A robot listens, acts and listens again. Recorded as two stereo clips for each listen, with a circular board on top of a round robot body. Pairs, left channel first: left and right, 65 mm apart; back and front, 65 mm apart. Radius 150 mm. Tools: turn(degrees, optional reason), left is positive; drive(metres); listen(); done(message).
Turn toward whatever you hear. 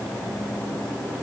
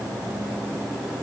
listen()
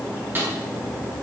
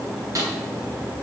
turn(degrees=-30, reason="The snare drum: 30° right.")
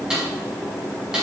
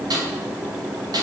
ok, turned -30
turn(degrees=-10, reason="The snare drum is now 10° right.")
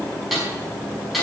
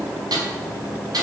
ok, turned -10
done("Found it: a snare drum, straight ahead, over 4 m away.")